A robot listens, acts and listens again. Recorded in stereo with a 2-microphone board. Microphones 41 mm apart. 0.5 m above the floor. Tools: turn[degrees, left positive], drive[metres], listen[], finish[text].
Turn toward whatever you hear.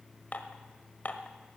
Thought: The dishes clattering: about 45° left or 135° left.
Action: turn[45]
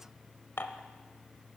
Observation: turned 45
Thought: So it is at 90° left.
Action: turn[90]
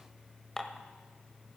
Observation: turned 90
Thought: The dishes clattering is now 10° left.
Action: turn[10]
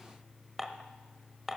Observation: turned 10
Action: finish[Found it: dishes clattering, straight ahead, 1 to 2 m away.]